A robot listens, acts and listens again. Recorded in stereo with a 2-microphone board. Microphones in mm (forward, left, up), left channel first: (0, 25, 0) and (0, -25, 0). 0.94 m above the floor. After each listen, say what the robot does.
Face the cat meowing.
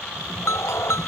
Turn 70° left.
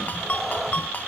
Found it: a cat meowing, straight ahead.